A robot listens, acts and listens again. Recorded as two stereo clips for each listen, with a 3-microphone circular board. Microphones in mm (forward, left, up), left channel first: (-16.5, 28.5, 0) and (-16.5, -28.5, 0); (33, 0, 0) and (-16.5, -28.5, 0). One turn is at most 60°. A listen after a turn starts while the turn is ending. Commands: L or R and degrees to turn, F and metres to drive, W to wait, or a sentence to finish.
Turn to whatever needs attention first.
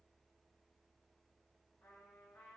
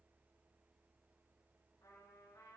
W
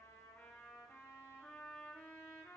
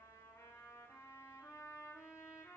W
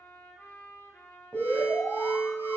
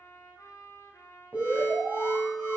L60
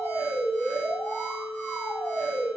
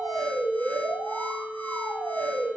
L60
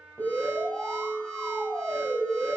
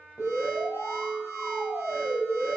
L10
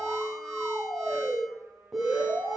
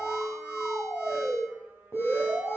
Found it: an alarm, straight ahead.